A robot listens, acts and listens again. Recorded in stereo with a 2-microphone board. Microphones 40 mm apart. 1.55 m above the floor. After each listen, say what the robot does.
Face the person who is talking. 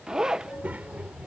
Turn 35° right.
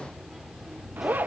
Found it: a child speaking, straight ahead.